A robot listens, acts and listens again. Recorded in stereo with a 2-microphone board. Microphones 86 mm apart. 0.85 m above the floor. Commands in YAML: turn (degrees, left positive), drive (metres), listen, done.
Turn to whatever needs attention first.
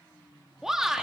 turn: -30
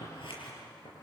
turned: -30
listen: true
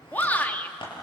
turn: 20
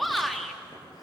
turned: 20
done: "Found it: a shout, straight ahead."